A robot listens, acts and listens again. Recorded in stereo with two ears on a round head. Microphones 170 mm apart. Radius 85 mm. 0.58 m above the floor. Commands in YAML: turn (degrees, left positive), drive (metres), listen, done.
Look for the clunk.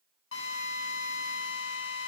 listen: true
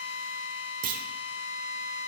turn: -45
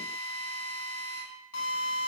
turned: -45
listen: true
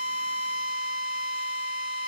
done: "I heard a clunk, but can't make it out now. It was about straight ahead or 90° right."